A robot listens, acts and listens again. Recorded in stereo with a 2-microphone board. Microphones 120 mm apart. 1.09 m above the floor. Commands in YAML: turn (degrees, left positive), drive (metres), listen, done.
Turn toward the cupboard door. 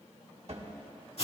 turn: -60
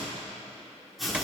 turn: -10
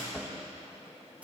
done: "Found it: a cupboard door, straight ahead, 1 to 2 m away."